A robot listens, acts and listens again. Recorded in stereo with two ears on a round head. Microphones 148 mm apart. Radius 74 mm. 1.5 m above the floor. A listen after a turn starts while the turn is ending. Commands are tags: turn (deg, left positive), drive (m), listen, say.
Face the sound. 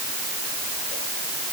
<listen/>
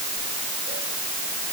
<listen/>
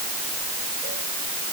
<say>I can't make out anything to turn to.</say>